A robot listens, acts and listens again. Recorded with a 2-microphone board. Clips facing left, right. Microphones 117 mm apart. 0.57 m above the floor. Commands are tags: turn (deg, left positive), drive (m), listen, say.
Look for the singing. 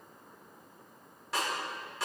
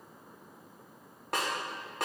<listen/>
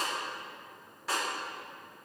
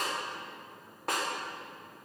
<listen/>
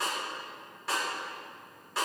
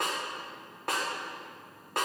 <say>I can't make out singing to turn to.</say>